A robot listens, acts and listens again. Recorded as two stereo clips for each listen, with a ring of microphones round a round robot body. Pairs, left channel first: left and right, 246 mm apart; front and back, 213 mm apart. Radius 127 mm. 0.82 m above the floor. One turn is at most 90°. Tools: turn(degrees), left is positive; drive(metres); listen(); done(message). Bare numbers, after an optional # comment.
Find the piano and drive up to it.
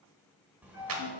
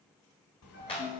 # The piano: 35° left.
turn(35)
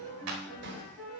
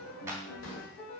drive(1.0)
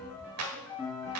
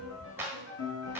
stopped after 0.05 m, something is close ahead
done("Blocked. The piano is further on, straight ahead.")